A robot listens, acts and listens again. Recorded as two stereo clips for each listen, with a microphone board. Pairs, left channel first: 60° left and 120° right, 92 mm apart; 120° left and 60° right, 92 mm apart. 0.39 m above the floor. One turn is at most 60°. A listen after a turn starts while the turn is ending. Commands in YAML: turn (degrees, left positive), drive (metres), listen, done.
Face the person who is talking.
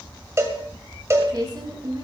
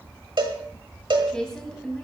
turn: -60
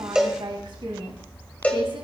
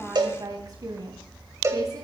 turn: -60
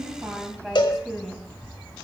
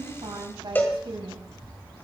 turn: -35
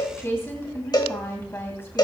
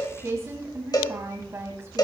done: "Found it: a woman speaking, straight ahead, 2 to 4 m away."